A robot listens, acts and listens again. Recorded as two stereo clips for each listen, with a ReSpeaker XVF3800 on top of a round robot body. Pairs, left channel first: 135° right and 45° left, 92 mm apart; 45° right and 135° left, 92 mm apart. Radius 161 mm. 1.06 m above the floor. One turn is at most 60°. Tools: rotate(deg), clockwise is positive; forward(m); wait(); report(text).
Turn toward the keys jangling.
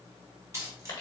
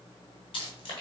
rotate(15)
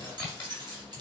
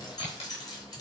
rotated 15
report("Facing the keys jangling.")